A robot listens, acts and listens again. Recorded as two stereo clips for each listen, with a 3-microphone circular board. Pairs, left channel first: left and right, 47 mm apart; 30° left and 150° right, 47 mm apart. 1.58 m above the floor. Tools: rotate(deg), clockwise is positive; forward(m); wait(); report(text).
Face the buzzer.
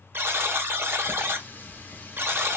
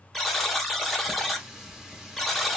rotate(60)
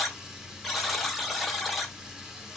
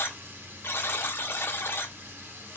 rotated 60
report("Facing the buzzer, under 1 m away.")